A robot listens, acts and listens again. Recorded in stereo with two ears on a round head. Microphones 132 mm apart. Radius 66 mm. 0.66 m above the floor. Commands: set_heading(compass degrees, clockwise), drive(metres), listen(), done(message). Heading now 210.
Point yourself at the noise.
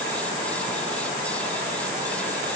listen()
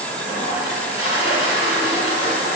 set_heading(165)
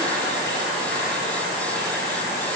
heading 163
listen()
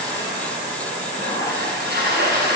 set_heading(73)
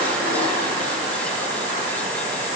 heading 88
set_heading(78)
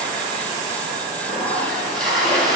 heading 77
done("Facing the toilet flushing.")